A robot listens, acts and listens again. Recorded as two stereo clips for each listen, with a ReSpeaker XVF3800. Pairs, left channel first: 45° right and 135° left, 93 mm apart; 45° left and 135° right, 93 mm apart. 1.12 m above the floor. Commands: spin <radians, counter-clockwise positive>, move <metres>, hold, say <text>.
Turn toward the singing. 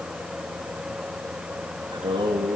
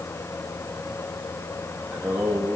spin 2.44
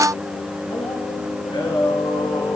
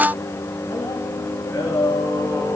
spin -0.26
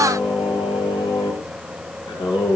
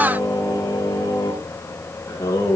spin -0.26
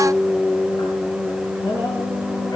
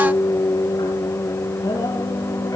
say Facing the singing, over 4 m away.